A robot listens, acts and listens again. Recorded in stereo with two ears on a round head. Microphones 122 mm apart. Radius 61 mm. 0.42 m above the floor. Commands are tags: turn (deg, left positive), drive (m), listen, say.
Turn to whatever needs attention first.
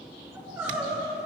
<turn deg="-20"/>
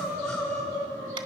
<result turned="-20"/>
<say>Found it: crying, straight ahead, over 4 m away.</say>